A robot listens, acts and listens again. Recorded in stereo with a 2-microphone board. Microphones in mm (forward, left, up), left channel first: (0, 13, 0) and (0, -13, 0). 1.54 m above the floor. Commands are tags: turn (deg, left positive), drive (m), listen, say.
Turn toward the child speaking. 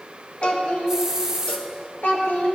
<turn deg="60"/>
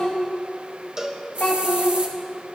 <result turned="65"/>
<turn deg="50"/>
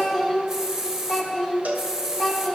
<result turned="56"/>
<say>Facing the child speaking.</say>